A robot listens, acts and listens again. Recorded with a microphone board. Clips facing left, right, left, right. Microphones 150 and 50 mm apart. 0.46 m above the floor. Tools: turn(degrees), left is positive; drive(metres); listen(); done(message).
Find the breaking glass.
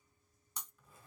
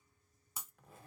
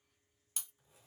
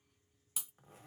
turn(degrees=-30)
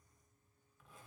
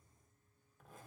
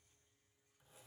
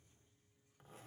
listen()
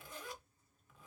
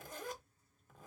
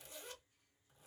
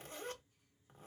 done("I heard breaking glass, but can't make it out now. It was about 25° left or 145° right.")